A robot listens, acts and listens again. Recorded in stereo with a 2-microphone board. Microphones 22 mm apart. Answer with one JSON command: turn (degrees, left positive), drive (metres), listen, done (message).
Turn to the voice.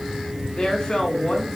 {"turn": 35}
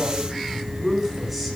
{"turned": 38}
{"done": "Found it: a woman speaking, straight ahead, over 4 m away."}